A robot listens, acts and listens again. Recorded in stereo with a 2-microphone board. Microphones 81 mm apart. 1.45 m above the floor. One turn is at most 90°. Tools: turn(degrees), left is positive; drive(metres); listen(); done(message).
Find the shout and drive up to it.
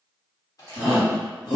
turn(degrees=75)
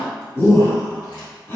turn(degrees=30)
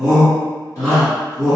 drive(metres=1.0)
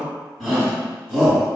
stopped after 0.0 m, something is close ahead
done("Blocked. The shout is further on, straight ahead.")